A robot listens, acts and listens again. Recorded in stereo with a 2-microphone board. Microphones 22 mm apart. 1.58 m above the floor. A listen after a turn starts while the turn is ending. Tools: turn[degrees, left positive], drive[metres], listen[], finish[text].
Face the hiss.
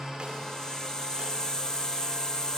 Thought: The hiss: about 45° left or 135° left.
Action: turn[45]
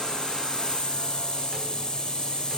Thought: So it is at 80° left.
Action: turn[80]
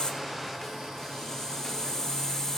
Thought: The hiss is now 35° left.
Action: turn[35]
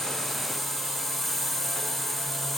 Thought: The hiss is now 15° left.
Action: turn[15]
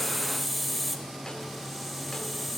Action: finish[Facing the hiss, 2 to 4 m away.]